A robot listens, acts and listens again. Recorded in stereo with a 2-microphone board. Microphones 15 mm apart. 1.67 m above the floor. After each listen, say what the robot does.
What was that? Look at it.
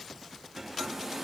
Turn 15° right.
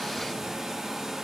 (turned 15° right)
Turn 150° right.
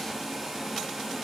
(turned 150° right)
Turn 30° right.
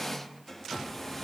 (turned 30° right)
Found it: a hair dryer, straight ahead, 2 to 4 m away.